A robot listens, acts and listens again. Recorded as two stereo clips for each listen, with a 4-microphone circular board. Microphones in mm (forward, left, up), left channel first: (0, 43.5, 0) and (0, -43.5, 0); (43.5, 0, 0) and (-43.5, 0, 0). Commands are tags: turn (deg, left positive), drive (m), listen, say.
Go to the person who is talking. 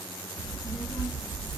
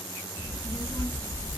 <turn deg="55"/>
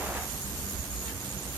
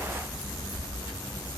<drive m="1.0"/>
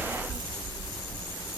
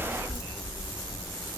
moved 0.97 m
<turn deg="-10"/>
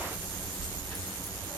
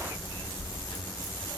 <drive m="1.0"/>
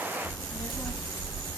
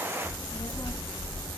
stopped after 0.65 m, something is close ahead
<say>Arrived at the child speaking, straight ahead.</say>